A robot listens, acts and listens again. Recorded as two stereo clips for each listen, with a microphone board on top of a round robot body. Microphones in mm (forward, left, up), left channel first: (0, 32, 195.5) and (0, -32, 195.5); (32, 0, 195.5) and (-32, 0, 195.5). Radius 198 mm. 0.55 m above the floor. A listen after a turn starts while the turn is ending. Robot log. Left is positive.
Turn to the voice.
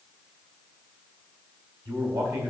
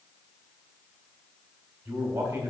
note: The man speaking: 120° right.
cmd yaw -120
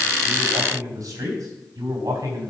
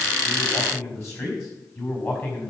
note: The man speaking is now 55° right.
cmd yaw -55
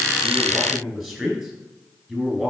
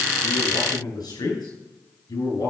end: Facing the man speaking, over 4 m away.